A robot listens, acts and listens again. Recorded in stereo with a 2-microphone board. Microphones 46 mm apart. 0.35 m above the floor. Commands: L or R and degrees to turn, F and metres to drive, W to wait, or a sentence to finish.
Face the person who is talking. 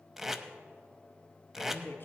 L50
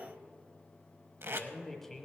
L10
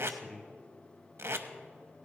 Found it: a man speaking, straight ahead, 1 to 2 m away.